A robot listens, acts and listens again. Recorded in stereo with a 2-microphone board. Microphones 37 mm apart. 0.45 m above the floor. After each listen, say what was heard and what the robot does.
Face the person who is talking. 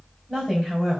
Turn 30° left.
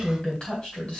So it is at 150° left. Turn 150° left.
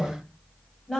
Found it: a woman speaking, straight ahead.